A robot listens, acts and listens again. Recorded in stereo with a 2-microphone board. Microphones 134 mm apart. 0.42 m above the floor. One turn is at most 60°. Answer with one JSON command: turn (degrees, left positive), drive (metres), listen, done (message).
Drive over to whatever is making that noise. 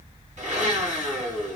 {"turn": -60}
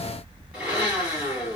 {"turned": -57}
{"turn": -10}
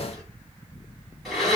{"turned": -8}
{"drive": 1.0}
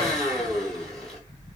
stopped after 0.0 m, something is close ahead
{"done": "Blocked. The blender is further on, straight ahead."}